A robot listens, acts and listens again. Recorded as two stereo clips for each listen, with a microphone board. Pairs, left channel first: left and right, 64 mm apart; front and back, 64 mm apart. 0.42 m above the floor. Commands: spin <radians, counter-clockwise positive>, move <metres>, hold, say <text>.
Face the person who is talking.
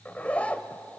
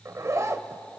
hold
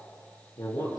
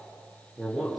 spin 1.66
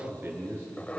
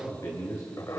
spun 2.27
spin -0.61
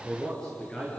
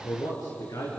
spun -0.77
spin 0.17
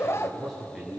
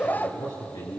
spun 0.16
say Facing the man speaking, over 4 m away.